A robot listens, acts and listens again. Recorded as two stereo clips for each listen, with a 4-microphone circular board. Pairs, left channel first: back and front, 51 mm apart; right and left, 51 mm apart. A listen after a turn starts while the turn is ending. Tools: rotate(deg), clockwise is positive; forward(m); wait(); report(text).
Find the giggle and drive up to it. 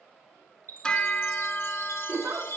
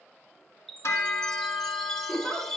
rotate(15)
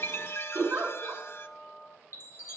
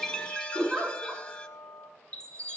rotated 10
forward(1.0)
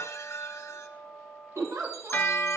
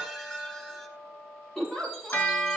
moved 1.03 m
forward(1.0)
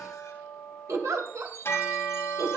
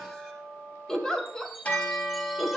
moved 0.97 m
rotate(10)
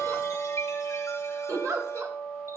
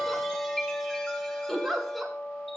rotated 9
forward(1.0)
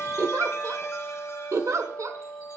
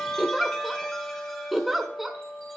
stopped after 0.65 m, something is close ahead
report("Arrived at the giggle, straight ahead.")